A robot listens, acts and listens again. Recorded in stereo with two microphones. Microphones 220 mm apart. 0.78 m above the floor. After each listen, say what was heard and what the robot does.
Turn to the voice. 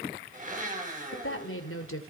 The woman speaking: about 75° left or 105° left. Turn 75° left.
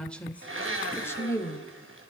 So it is at 15° left. Turn 15° left.
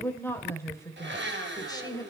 The woman speaking is now 20° left. Turn 20° left.
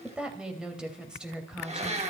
Found it: a woman speaking, straight ahead, 2 to 4 m away.